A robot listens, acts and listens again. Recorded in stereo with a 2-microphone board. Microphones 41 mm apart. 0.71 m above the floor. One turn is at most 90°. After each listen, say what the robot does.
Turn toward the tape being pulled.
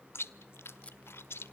Turn 30° left.
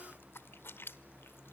Keep listening.
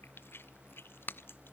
Turn 90° left.
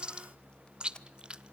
Turn 25° left.
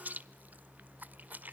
Keep listening.
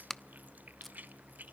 Turn 10° left.
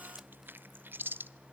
Keep listening.
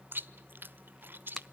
Keep listening.
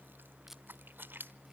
I heard tape being pulled from this way, but can't make it out now.